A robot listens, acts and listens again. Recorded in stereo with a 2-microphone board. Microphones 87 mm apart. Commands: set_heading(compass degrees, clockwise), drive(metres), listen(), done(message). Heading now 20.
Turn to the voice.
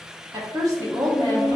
set_heading(65)
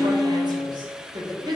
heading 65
set_heading(145)
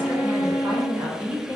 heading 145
set_heading(170)
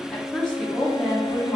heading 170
set_heading(160)
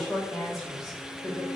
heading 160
done("Facing the woman speaking, 1 to 2 m away.")